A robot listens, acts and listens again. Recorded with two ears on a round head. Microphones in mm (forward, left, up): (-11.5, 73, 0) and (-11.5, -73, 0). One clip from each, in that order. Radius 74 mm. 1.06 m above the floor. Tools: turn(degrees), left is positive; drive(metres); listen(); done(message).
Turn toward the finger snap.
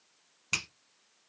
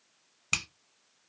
turn(degrees=-20)
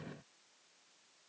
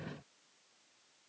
listen()
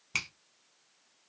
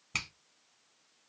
done("Facing the finger snap, under 1 m away.")